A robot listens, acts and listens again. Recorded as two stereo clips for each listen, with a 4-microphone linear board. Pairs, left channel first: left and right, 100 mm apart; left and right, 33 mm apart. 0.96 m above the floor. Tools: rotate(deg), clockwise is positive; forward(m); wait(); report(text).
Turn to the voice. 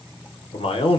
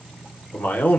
rotate(-65)
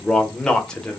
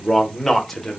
rotate(-10)
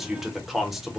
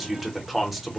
report("Found it: a man speaking, straight ahead.")